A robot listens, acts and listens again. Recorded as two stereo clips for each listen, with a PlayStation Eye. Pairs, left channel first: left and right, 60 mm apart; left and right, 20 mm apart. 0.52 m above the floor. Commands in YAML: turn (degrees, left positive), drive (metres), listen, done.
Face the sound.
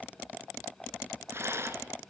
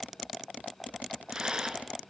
turn: -45
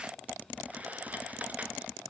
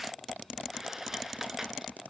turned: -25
turn: -25
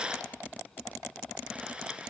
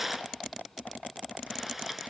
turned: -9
turn: -15
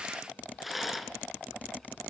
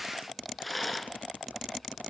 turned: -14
done: "Found it: a rattle, straight ahead."